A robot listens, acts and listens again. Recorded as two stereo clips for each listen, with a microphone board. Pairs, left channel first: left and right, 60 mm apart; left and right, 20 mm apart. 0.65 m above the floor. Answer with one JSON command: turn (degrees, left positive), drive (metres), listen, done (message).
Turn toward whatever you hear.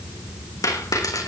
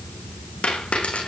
{"turn": 90}
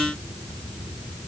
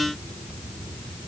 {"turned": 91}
{"done": "Facing where the dropped coin came from. I can't hear it now."}